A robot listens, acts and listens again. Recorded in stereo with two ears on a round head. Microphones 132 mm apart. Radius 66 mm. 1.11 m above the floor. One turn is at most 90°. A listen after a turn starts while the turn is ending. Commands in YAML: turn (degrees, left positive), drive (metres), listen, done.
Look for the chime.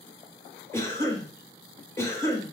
listen: true
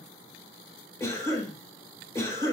listen: true
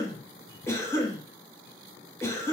done: "I can't make out a chime, only a cough."